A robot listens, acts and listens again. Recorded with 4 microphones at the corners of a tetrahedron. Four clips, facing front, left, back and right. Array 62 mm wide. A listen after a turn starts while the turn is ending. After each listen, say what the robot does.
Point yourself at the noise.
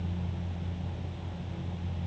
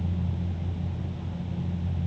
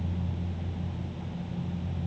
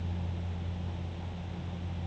Keep listening.
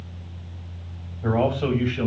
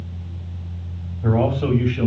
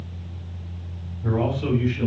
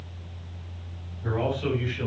Turn 40° left.
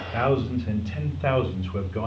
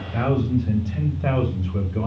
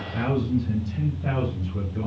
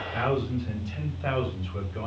Turn 10° left.
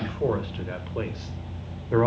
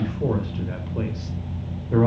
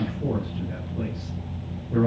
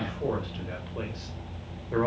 Facing the man speaking.